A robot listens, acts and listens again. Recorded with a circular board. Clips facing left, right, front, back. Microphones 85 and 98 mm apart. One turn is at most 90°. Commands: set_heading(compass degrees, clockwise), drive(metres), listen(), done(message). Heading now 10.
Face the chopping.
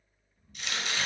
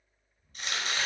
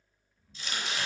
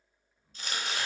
set_heading(100)
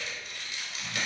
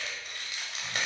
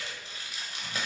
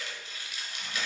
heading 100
set_heading(150)
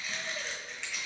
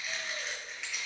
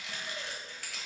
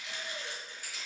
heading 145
done("Facing the chopping.")